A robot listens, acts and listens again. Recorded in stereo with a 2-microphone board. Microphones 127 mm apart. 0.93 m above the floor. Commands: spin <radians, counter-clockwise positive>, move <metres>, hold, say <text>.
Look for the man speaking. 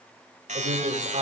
spin -0.96
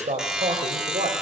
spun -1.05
spin -1.13
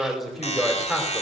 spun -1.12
say Facing the man speaking, 2 to 4 m away.